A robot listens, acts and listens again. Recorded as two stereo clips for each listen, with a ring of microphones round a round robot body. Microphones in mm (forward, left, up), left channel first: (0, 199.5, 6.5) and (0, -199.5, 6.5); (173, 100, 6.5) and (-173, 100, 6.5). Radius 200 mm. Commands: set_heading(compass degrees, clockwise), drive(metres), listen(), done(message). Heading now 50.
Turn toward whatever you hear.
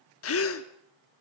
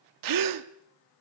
set_heading(260)
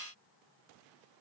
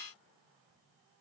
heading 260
done("Facing where the gasp came from. I can't hear it now.")